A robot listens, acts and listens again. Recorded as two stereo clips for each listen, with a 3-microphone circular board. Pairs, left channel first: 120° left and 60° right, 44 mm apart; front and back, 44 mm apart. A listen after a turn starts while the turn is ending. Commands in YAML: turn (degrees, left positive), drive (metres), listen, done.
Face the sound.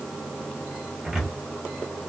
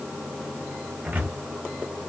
turn: -140
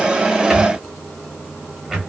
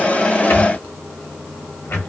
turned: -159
turn: 20
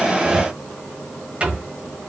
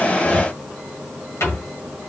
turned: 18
done: "Found it: a cupboard door, straight ahead."